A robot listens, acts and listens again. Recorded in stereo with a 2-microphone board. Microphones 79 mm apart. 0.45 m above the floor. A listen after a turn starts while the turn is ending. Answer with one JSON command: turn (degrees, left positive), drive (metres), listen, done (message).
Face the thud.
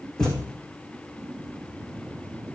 {"turn": 30}
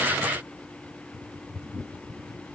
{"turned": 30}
{"listen": true}
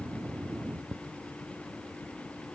{"done": "I heard a thud, but can't make it out now. It was about 20° right or 140° left."}